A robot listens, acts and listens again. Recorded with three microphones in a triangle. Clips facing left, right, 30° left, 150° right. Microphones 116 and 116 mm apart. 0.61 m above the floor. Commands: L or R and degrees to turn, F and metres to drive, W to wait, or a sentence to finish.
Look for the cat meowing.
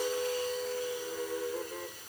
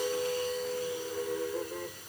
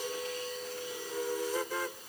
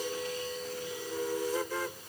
W
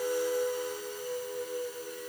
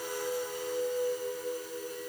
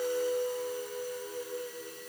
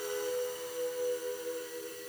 W
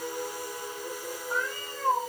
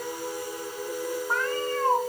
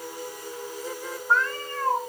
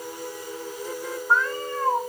R75
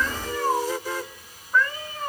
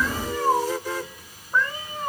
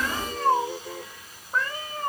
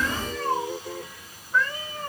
R15
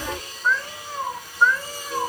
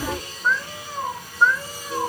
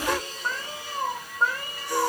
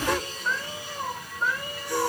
Found it: a cat meowing, straight ahead, 2 to 4 m away.